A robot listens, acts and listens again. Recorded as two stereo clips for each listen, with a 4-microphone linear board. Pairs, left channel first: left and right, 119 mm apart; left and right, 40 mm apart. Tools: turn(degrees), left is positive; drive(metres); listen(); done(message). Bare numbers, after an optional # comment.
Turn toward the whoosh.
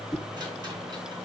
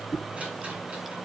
turn(30)
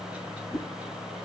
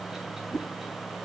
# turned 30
# So it is at 140° left.
turn(140)
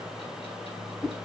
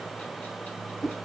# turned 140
done("Facing the whoosh, 1 to 2 m away.")